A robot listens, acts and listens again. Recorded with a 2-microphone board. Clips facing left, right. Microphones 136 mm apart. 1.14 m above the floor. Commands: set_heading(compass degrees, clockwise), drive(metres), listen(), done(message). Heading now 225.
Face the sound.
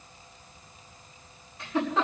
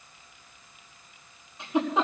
set_heading(245)
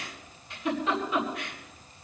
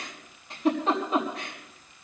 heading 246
set_heading(21)
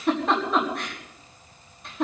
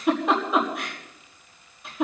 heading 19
done("Found it: a giggle, straight ahead, over 4 m away.")